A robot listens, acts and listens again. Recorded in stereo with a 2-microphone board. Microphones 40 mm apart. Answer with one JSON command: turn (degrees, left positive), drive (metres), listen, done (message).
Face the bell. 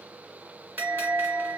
{"turn": -60}
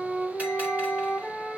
{"listen": true}
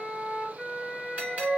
{"turn": -45}
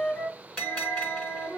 {"turn": 30}
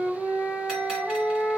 {"listen": true}
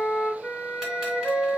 {"listen": true}
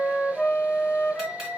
{"turn": -15}
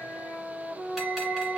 {"listen": true}
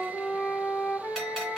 {"listen": true}
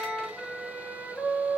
{"done": "Facing where the bell came from. I can't hear it now."}